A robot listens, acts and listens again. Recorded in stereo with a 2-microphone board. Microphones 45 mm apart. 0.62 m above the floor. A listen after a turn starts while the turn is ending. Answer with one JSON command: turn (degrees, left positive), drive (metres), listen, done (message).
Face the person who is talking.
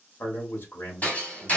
{"turn": 60}
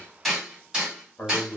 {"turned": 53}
{"turn": 45}
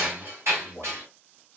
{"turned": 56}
{"turn": -10}
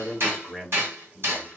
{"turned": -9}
{"done": "Facing the man speaking."}